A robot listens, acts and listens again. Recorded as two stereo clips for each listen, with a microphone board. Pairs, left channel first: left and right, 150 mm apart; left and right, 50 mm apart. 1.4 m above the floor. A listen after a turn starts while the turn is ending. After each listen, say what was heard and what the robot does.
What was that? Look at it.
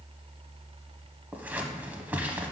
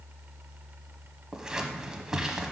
Turn 30° right.
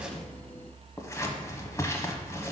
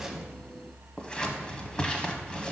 So it is at 20° left. Turn 20° left.
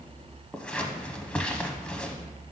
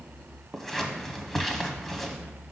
Found it: scissors, straight ahead, under 1 m away.